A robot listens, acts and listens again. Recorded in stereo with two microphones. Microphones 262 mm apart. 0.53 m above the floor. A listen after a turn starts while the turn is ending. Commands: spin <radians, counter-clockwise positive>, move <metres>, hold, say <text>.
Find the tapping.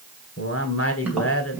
spin -0.52
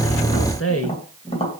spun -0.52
spin 0.44
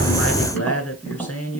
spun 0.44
say Facing the tapping.